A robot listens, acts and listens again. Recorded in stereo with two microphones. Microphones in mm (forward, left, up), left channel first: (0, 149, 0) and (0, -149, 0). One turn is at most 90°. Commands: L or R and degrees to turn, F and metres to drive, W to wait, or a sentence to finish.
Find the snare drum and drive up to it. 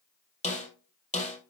L25
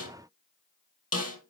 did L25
L90
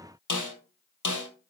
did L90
L85
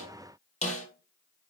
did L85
L25
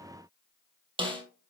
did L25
R15
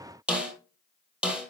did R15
F1.0
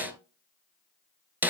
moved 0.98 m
F1.0
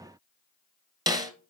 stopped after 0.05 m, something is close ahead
R15
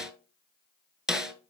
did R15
Arrived at the snare drum, straight ahead.